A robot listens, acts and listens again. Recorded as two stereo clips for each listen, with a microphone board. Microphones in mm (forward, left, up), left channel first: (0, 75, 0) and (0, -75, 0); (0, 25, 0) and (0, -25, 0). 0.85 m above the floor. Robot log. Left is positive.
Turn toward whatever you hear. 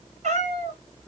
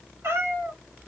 note: The cat meowing: about 50° right or 130° right.
cmd yaw -50
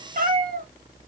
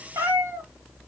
note: So it is at 70° right.
cmd yaw -70
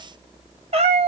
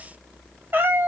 note: The cat meowing is now 45° right.
cmd yaw -45
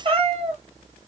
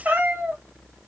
note: The cat meowing is now 45° right.
cmd yaw -45
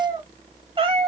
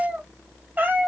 note: The cat meowing is now 35° right.
cmd yaw -35
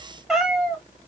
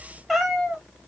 end: Found it: a cat meowing, straight ahead, 1 to 2 m away.